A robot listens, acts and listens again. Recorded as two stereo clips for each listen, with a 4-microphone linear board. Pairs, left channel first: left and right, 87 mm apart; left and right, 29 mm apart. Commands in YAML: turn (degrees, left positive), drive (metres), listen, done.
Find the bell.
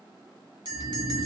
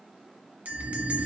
turn: -60
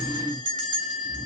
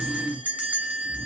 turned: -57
turn: -60
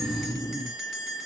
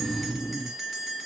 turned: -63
done: "Facing the bell, 1 to 2 m away."